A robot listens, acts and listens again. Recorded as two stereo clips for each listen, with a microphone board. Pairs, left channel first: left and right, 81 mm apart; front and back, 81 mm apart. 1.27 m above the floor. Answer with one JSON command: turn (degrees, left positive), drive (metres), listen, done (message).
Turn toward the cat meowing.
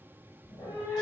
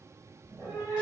{"turn": 100}
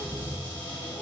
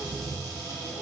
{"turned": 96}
{"done": "Facing the cat meowing, 1 to 2 m away."}